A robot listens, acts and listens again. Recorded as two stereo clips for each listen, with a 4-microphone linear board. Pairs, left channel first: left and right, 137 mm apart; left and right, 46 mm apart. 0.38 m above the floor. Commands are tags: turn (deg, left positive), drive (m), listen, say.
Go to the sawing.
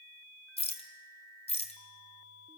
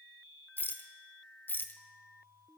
<listen/>
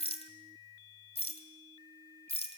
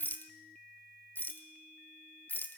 <listen/>
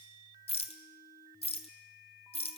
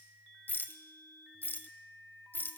<say>I can't make out sawing to turn to.</say>